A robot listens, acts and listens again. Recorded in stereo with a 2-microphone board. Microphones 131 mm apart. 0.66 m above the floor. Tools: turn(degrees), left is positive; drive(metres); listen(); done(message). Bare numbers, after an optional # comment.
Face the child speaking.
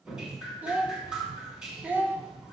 turn(-30)
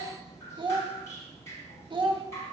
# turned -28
# So it is at 140° right.
turn(-140)
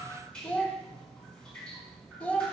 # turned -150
# The child speaking is now 10° left.
turn(10)
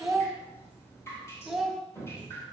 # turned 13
done("Found it: a child speaking, straight ahead, under 1 m away.")